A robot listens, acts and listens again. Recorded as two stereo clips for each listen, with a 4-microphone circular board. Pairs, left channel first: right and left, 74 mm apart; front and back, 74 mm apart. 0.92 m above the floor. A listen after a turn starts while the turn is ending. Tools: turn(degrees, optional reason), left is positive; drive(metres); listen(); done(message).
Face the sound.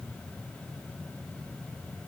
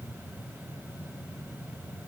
listen()
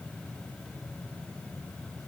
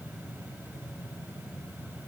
listen()
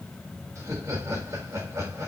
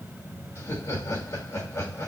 turn(degrees=45, reason="The laughter: 45° left.")
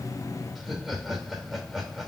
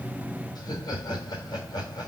done("Facing the laughter.")